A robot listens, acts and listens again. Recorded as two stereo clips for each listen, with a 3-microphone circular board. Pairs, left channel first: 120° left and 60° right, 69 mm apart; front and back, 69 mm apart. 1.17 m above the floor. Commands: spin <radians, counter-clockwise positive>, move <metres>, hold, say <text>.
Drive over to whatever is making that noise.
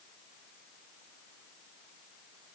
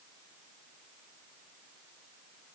hold
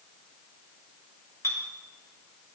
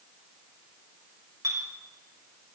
spin 2.79
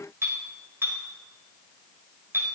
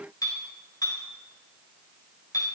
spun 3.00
spin -0.17
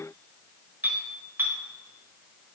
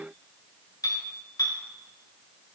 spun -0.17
move 1.0
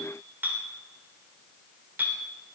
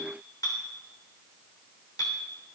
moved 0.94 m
move 1.0
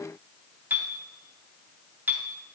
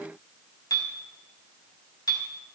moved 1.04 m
move 1.0
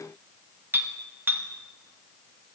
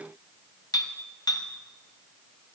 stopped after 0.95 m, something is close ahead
say I am next to the clink.